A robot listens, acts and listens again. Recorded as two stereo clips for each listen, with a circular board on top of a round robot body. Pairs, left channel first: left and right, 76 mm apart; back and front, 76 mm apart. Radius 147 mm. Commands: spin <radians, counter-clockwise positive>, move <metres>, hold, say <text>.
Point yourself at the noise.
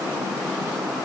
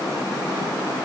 hold
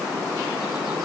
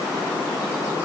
hold
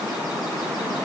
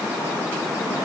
say I can't make out anything to turn to.